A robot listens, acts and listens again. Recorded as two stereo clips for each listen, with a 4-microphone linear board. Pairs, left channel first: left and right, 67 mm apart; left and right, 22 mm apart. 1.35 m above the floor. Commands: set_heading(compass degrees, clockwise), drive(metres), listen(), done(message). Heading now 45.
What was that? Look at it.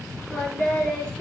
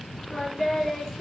set_heading(15)
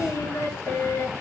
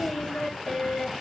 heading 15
set_heading(240)
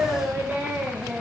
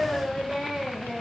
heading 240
set_heading(260)
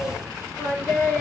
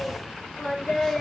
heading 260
done("Found it: singing, straight ahead.")